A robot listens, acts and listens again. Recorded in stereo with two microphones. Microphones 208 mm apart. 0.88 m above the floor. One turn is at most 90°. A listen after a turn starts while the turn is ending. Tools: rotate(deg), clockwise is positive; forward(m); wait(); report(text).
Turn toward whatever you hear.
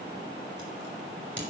rotate(-60)
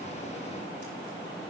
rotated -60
wait()
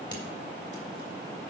wait()
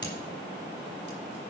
rotate(-60)
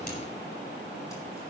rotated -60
wait()
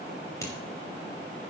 rotate(-15)
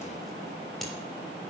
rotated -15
report("Found it: scissors, straight ahead.")